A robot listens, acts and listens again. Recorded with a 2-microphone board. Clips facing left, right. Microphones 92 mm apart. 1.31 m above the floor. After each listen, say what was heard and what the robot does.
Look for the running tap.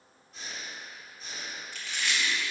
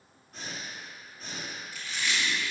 Keep listening.
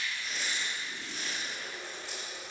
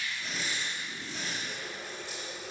Turn 90° right.
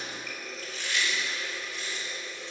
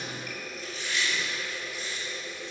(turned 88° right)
So it is at 10° right. Turn 10° right.
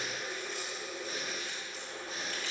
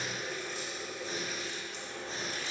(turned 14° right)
Found it: a running tap, straight ahead, 2 to 4 m away.